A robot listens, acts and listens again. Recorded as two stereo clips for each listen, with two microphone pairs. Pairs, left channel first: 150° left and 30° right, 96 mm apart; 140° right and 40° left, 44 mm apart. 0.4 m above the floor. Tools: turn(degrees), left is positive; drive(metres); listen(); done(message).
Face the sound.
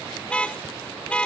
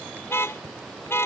turn(degrees=-135)
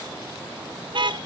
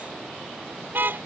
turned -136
done("Found it: a car horn, straight ahead.")